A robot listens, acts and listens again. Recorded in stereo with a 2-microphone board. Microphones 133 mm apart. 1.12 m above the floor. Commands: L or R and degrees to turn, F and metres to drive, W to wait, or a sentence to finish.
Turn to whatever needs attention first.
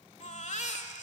L65
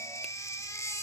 L25
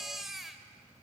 Facing the baby crying.